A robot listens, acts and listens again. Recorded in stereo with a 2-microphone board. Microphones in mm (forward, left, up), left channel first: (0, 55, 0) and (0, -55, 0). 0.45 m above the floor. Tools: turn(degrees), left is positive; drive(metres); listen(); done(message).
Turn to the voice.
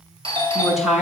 turn(degrees=-30)
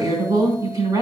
turn(degrees=-145)
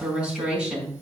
turn(degrees=-10)
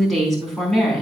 done("Found it: a woman speaking, straight ahead, over 4 m away.")